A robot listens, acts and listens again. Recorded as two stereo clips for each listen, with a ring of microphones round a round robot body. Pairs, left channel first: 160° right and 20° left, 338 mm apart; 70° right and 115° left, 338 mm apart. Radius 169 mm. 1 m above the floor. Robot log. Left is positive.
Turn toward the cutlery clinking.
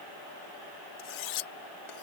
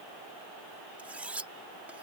note: The cutlery clinking: 160° right.
cmd yaw -160
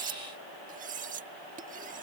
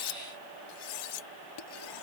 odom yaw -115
note: The cutlery clinking is now 45° right.
cmd yaw -45
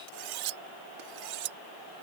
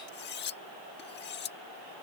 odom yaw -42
end: Facing the cutlery clinking.